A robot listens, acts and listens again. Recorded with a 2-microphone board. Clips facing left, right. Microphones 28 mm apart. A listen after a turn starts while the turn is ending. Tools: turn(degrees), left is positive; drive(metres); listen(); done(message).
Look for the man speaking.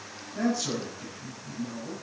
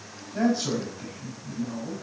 turn(degrees=-35)
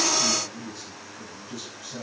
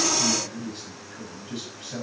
turn(degrees=-110)
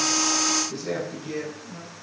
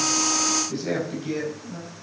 turn(degrees=-20)
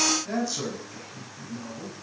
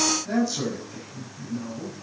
done("Facing the man speaking.")